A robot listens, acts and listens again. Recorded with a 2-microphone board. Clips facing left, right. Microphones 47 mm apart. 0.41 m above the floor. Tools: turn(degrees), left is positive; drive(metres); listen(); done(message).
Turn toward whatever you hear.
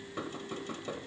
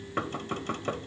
turn(degrees=-55)
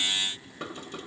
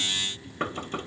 turn(degrees=-50)
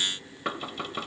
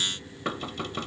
turn(degrees=10)
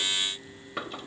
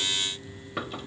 done("Facing the knocking, 1 to 2 m away.")